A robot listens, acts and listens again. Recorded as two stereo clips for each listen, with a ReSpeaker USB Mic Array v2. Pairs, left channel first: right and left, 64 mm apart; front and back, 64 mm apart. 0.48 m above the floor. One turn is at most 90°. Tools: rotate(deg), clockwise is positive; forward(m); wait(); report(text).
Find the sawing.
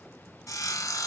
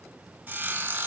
rotate(90)
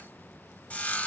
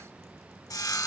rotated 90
rotate(20)
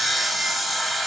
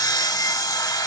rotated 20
report("Facing the sawing, under 1 m away.")